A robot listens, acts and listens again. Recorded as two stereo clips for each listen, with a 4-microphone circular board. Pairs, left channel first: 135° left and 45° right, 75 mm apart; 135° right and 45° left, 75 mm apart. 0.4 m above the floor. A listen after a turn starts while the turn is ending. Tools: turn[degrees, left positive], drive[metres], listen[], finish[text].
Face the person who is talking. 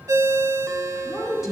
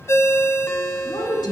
Thought: The woman speaking: 135° right.
Action: turn[-135]
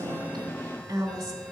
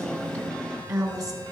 Action: finish[Found it: a woman speaking, straight ahead, 2 to 4 m away.]